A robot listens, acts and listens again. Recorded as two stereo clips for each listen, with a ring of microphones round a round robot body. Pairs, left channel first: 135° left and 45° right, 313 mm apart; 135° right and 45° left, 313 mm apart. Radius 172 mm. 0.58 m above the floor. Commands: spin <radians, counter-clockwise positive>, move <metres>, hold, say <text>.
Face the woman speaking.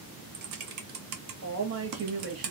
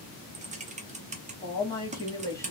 spin -1.05
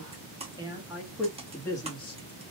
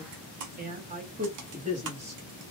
spin 1.40
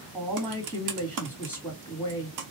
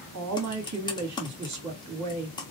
spin 0.70
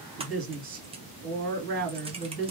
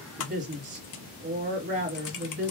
spin -0.26
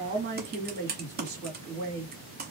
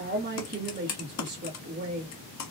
say Facing the woman speaking, 1 to 2 m away.